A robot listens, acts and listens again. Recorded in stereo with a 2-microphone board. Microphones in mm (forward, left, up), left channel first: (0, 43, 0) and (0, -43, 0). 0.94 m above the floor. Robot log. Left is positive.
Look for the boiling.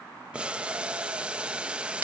cmd yaw -30
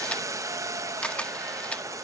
note: So it is at 135° right.
cmd yaw -135
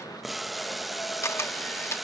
end: Found it: boiling, straight ahead.